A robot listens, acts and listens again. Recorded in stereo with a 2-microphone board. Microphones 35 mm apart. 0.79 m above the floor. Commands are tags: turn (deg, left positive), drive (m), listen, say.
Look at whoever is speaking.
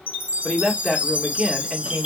<turn deg="-30"/>
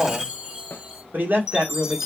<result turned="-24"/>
<turn deg="-125"/>
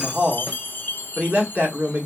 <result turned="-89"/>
<turn deg="-40"/>
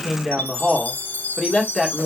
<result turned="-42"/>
<say>Found it: a man speaking, straight ahead, 1 to 2 m away.</say>